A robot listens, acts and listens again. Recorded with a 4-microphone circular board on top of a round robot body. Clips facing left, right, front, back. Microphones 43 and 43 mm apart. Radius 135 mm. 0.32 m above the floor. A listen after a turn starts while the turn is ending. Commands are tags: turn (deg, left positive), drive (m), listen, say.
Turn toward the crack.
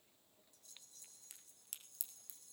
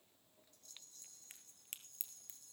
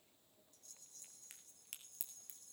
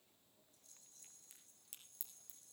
<turn deg="-40"/>
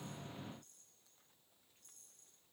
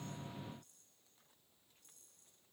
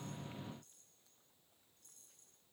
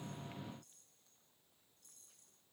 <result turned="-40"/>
<say>I heard a crack from this way, but can't make it out now.</say>